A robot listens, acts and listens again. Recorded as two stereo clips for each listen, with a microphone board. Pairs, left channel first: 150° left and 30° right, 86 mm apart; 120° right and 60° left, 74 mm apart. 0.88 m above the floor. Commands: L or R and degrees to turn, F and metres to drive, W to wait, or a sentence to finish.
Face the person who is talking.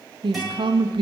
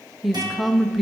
R30
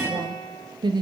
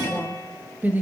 Found it: a woman speaking, straight ahead.